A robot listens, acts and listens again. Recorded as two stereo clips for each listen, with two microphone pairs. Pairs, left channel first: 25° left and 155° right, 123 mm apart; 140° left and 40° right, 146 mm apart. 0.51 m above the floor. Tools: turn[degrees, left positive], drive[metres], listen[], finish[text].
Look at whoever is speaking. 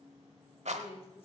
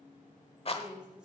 Thought: The woman speaking: 45° left.
Action: turn[45]
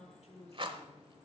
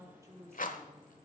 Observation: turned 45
Thought: The woman speaking is now 30° left.
Action: turn[30]
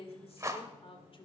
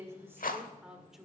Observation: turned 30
Thought: The woman speaking is now 50° left.
Action: turn[50]
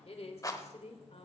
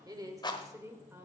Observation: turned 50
Thought: The woman speaking is now 35° left.
Action: turn[35]
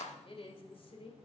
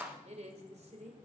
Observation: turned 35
Action: finish[Found it: a woman speaking, straight ahead.]